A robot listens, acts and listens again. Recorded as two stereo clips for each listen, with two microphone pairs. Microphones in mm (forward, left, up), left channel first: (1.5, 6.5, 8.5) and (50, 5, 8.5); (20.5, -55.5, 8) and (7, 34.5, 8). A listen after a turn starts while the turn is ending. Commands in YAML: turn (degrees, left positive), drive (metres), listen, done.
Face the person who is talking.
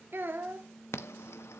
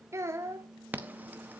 turn: 40
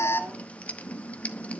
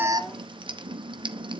listen: true
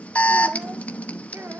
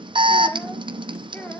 listen: true
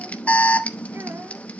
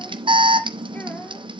done: "Facing where the child speaking came from. I can't hear it now."